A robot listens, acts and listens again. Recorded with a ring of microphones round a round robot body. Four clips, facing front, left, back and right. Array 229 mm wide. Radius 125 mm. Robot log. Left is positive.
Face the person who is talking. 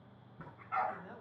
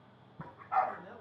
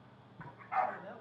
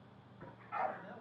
note: The man speaking: 165° right.
cmd yaw -165
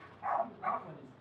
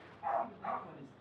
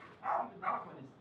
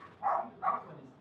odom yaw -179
note: The man speaking is now 35° left.
cmd yaw +35
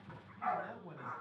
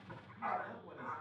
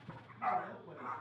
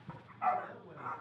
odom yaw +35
end: Found it: a man speaking, straight ahead.